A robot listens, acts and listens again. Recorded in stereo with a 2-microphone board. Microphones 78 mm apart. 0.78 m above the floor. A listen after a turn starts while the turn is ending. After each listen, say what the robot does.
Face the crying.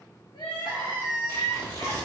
Turn 70° left.
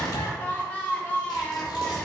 Turn 20° left.
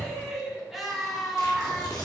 Facing the crying.